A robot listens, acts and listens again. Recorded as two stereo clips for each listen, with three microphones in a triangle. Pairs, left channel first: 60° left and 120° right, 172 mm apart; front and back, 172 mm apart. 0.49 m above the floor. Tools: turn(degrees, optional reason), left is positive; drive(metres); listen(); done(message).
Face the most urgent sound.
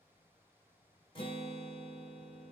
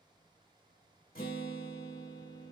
listen()
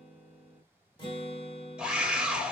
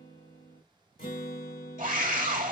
turn(degrees=155, reason="The scream: 155° left.")
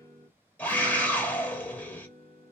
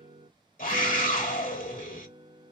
turn(degrees=-20, reason="The scream is now 20° right.")
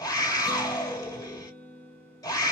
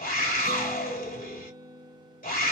done("Found it: a scream, straight ahead.")